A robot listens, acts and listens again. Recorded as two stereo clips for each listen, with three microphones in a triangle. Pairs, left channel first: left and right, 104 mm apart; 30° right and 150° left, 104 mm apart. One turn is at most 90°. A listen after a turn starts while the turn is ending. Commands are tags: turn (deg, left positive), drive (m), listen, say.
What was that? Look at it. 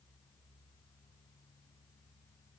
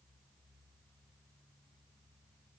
<listen/>
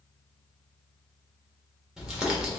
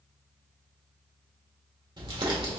<turn deg="-90"/>
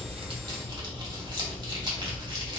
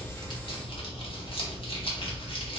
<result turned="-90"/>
<turn deg="-55"/>
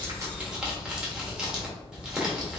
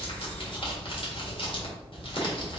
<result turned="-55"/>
<turn deg="-10"/>
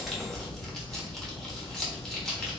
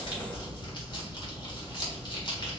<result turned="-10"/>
<say>Facing the crumpling, 1 to 2 m away.</say>